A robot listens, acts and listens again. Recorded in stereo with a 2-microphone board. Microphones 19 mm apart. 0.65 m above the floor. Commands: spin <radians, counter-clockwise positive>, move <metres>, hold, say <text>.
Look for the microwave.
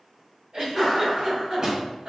spin -0.52
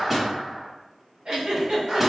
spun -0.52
say Found it: a microwave, straight ahead, 1 to 2 m away.